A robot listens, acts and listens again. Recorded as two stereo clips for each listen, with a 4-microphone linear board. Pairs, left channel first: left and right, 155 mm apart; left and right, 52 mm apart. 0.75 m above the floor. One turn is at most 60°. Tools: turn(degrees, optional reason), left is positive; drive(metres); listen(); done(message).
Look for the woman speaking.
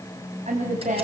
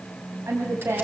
turn(degrees=-50, reason="The woman speaking: about 50° right or 130° right.")
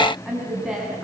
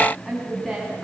done("Facing the woman speaking, over 4 m away.")